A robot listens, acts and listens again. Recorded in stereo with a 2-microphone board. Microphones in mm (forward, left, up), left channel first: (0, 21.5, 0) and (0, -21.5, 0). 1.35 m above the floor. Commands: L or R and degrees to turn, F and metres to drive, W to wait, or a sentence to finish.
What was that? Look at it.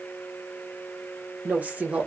R30
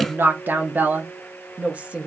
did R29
R25
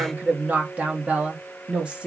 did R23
R20
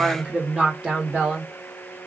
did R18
R30
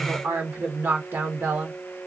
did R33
R120
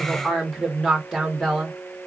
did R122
Found it: a woman speaking, straight ahead.